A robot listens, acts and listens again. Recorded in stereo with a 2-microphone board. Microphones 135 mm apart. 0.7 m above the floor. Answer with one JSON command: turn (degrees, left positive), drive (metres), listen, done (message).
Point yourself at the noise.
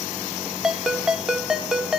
{"turn": -30}
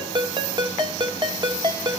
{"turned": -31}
{"turn": -145}
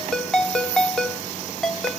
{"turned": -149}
{"done": "Facing the ringtone, under 1 m away."}